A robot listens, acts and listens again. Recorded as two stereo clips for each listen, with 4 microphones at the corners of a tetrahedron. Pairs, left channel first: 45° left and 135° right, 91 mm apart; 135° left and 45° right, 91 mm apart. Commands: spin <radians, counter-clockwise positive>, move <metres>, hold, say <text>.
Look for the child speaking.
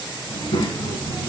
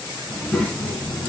spin 0.96
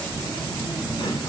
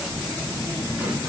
spin 0.17
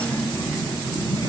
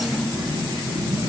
say Found it: a child speaking, straight ahead, 2 to 4 m away.